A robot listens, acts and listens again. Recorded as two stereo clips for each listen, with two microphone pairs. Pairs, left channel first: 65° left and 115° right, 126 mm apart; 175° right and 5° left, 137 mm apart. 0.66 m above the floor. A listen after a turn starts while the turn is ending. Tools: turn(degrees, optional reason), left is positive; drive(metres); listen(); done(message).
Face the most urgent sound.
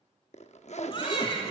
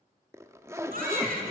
turn(degrees=15, reason="The baby crying: 15° left.")
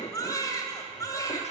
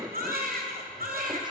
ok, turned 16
done("Facing the baby crying.")